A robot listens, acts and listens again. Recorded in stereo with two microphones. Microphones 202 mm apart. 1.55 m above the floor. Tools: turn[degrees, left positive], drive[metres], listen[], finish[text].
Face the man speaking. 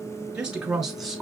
Action: turn[30]
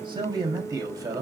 Thought: So it is at 15° right.
Action: turn[-15]
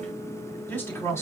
Thought: The man speaking is now 15° left.
Action: turn[15]
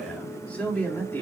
Thought: The man speaking is now 10° left.
Action: turn[10]
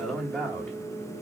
Action: finish[Found it: a man speaking, straight ahead, 2 to 4 m away.]